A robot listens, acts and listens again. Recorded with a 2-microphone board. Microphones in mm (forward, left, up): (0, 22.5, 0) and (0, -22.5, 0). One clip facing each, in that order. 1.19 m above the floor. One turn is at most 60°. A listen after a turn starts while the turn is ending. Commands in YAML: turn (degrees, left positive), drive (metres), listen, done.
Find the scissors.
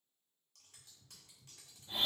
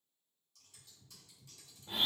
turn: 50
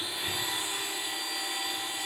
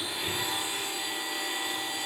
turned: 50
listen: true
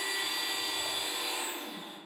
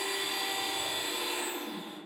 listen: true
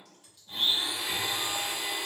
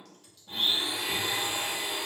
turn: 10
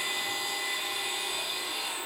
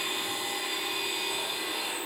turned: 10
listen: true
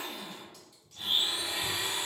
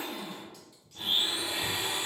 done: "Facing the scissors, under 1 m away."